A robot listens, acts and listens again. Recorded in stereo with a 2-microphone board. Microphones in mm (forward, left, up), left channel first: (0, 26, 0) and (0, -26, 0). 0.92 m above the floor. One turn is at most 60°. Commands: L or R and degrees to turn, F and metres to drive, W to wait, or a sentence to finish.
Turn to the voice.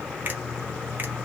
W
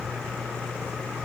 W
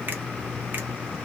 I can't make out anyone speaking to turn to.